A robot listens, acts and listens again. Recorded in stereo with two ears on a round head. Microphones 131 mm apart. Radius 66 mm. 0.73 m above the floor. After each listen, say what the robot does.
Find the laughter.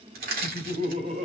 Turn 45° right.
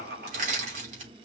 Turn 85° right.
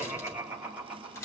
Turn 10° right.
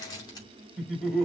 Found it: laughter, straight ahead.